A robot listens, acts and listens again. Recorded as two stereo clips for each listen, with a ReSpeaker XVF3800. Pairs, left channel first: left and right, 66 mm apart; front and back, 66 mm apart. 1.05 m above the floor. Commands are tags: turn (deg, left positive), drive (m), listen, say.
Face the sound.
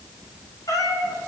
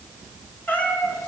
<turn deg="65"/>
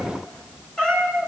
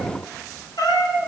<turn deg="10"/>
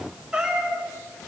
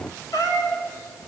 <turn deg="-10"/>
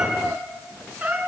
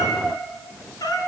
<turn deg="-15"/>
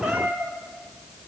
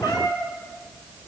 <turn deg="-10"/>
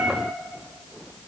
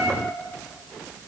<say>Facing the cat meowing.</say>